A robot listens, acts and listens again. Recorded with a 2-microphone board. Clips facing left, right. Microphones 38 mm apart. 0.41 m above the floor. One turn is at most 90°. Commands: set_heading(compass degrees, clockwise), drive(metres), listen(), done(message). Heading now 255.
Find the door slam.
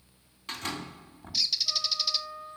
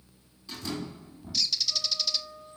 set_heading(195)
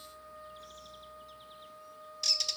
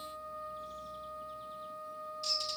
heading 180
listen()
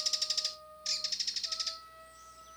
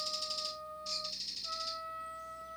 done("I heard a door slam, but can't make it out now. It was about 15° right or 45° left.")